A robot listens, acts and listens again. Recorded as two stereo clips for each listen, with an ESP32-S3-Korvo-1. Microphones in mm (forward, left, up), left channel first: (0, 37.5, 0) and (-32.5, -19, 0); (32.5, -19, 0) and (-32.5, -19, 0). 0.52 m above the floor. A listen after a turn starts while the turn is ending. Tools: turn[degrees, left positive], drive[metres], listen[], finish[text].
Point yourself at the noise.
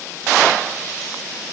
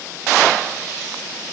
Action: listen[]
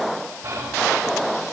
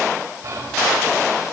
Thought: The whispering: 140° right.
Action: turn[-140]
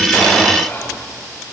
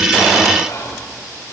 Thought: The whispering is now 25° left.
Action: turn[25]
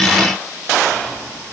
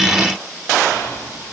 Action: finish[Found it: whispering, straight ahead, 2 to 4 m away.]